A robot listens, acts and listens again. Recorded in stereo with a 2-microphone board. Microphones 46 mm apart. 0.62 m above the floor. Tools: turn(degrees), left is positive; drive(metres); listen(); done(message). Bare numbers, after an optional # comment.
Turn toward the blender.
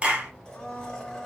# The blender: about 15° left or 165° left.
turn(15)
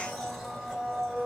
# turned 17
done("Found it: a blender, straight ahead, 1 to 2 m away.")